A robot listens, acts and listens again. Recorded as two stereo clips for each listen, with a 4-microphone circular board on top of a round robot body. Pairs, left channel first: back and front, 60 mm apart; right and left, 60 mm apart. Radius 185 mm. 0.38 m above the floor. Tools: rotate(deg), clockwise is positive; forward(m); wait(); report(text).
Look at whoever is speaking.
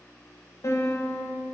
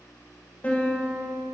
wait()
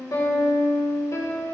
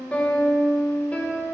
wait()
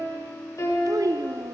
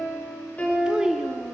rotate(-10)
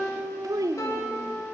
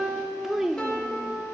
report("Found it: a child speaking, straight ahead.")